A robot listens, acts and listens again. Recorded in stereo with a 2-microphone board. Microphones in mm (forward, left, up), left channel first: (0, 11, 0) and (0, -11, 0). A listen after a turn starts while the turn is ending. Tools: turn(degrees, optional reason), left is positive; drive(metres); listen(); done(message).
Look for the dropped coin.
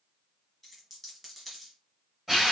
turn(degrees=30)
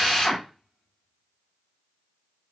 listen()
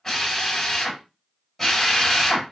done("I heard a dropped coin, but can't make it out now. It was about 30° right or 150° left.")